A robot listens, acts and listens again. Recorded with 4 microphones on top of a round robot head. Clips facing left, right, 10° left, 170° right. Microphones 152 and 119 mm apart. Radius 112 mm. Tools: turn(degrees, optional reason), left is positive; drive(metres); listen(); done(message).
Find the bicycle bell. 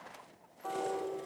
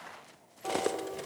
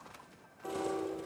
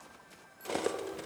listen()
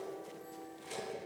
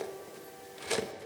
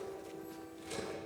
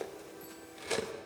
listen()
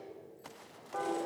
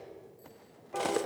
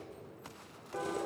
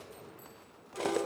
done("I can't make out a bicycle bell, only cutlery clinking and a piano.")